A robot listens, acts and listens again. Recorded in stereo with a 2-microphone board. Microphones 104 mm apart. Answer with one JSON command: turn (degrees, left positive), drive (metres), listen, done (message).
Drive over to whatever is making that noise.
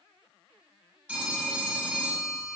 {"turn": -30}
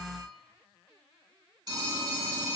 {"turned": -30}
{"turn": -140}
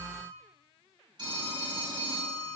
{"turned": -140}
{"turn": -40}
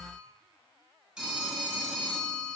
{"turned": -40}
{"drive": 1.0}
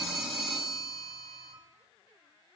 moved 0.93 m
{"drive": 1.0}
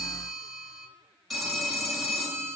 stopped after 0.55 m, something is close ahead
{"done": "Arrived at the phone ringing, straight ahead."}